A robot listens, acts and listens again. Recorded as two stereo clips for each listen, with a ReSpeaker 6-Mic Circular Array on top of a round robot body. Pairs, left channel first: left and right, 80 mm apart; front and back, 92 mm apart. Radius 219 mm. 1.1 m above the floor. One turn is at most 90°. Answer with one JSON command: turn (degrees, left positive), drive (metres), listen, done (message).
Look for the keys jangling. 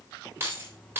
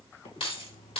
{"turn": -25}
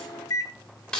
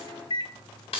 {"turn": 10}
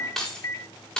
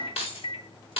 {"turn": 10}
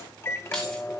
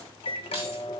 {"listen": true}
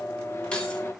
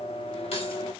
{"listen": true}
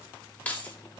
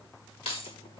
{"turn": 20}
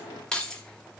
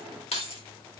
{"turn": 10}
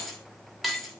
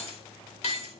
{"done": "Facing the keys jangling, 2 to 4 m away."}